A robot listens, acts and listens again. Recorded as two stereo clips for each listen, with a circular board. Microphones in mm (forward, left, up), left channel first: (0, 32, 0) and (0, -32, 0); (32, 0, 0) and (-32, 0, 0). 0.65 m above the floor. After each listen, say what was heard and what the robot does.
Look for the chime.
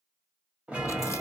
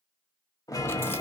The chime: 20° right. Turn 20° right.
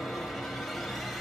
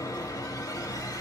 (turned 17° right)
Found it: a chime, straight ahead, 1 to 2 m away.